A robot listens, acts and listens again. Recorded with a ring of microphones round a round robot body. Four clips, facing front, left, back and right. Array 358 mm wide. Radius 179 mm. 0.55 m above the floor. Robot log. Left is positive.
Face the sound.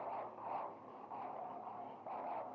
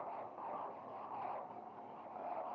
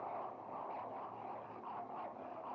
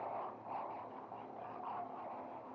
cmd idle
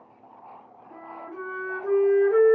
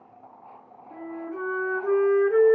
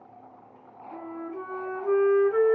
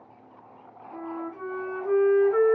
note: The flute: 70° left.
cmd yaw +70
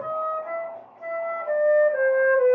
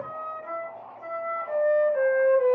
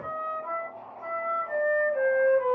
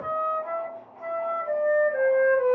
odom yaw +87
note: The flute is now 20° right.
cmd yaw -20
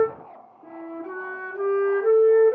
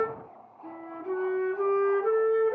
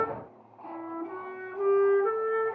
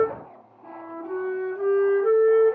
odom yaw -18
end: Facing the flute, 1 to 2 m away.